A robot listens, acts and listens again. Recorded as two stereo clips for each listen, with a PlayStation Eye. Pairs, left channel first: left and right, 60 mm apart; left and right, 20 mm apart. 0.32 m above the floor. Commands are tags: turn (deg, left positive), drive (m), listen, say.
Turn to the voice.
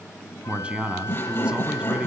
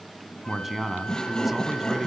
<turn deg="-15"/>
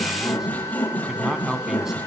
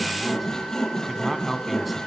<turn deg="-10"/>
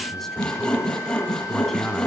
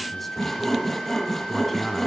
<listen/>
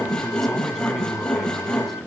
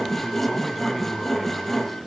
<listen/>
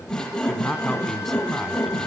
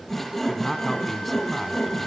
<say>Found it: a man speaking, straight ahead, 2 to 4 m away.</say>